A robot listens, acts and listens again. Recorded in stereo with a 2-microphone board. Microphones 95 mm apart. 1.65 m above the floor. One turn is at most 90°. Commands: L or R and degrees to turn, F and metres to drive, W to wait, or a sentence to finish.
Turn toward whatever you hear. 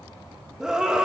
R30
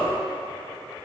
L20
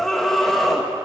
Facing the scream, 2 to 4 m away.